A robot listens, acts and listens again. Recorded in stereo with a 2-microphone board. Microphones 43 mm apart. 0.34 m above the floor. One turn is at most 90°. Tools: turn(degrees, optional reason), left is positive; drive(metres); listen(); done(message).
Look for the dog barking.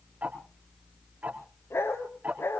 turn(degrees=70, reason="The dog barking: about 70° left or 110° left.")
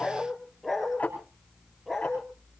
done("Found it: a dog barking, straight ahead.")